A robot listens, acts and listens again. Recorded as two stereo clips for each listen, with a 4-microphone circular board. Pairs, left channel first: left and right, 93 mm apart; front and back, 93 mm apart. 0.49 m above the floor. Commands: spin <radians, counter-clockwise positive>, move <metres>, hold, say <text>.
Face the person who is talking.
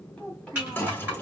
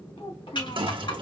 spin 0.17
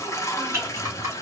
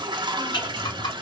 hold
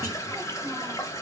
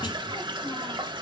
hold
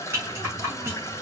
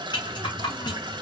say Facing where the child speaking came from. I can't hear it now.